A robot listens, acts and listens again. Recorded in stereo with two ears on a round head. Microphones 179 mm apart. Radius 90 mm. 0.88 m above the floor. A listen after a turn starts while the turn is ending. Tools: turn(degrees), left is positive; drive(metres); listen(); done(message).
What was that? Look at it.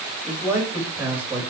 turn(degrees=-30)
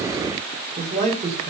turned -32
turn(degrees=-145)
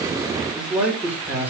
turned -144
turn(degrees=-10)
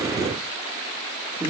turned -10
turn(degrees=-15)
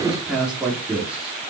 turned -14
done("Found it: a man speaking, straight ahead, 2 to 4 m away.")